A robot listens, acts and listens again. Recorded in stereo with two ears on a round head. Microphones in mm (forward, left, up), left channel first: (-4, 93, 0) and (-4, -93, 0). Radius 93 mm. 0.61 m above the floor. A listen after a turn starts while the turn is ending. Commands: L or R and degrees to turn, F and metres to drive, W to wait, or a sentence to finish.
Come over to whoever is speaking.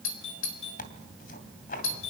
W
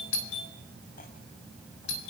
W
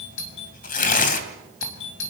I can't make out anyone speaking, only a doorbell and tearing paper.